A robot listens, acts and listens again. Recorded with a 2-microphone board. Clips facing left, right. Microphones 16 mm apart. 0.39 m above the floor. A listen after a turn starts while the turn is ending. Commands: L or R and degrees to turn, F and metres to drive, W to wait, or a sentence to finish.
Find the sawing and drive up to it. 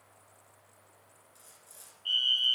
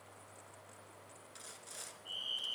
R40
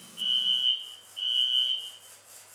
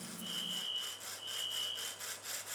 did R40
R95
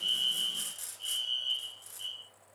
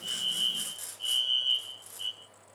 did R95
F1.0
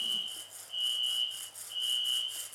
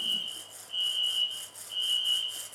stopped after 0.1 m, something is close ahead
Something is in my way. I am facing the sawing but have not reached it.